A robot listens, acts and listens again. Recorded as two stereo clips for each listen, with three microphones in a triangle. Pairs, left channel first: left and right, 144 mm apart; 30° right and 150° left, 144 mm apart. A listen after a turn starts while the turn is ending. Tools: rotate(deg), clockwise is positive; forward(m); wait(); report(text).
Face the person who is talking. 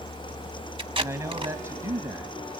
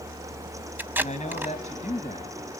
rotate(20)
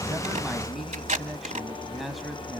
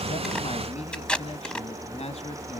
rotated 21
report("Found it: a man speaking, straight ahead, 1 to 2 m away.")